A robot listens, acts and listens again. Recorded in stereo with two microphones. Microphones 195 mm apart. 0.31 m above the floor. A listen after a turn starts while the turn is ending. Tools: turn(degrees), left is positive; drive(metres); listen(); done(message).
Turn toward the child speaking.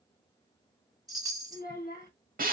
turn(degrees=45)
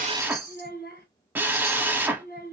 turn(degrees=80)
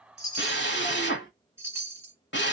listen()
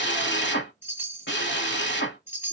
listen()
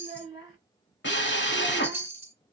turn(degrees=-25)
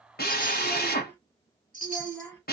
turn(degrees=10)
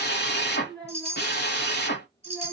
done("Found it: a child speaking, straight ahead, 1 to 2 m away.")